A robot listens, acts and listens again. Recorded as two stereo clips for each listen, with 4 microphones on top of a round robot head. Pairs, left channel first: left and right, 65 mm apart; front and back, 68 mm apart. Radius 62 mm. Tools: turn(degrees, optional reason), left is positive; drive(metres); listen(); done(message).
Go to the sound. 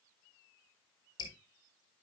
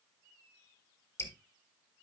turn(degrees=55, reason="The dripping: 55° left.")
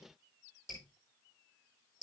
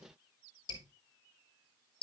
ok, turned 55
drive(metres=1.0)
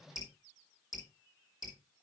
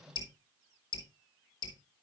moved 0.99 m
drive(metres=1.0)
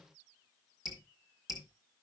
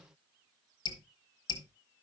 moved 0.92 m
drive(metres=1.0)
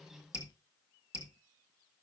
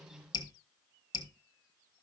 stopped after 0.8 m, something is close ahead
turn(degrees=-10, reason="The dripping is now 10° right.")
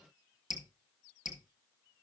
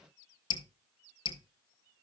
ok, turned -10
done("Arrived at the dripping, straight ahead.")